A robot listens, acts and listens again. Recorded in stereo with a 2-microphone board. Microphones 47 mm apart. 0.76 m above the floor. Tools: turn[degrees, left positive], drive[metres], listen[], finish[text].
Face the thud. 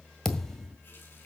Action: turn[30]
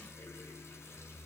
Action: listen[]
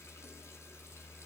Action: finish[I heard a thud, but can't make it out now. It was about 20° right or 140° left.]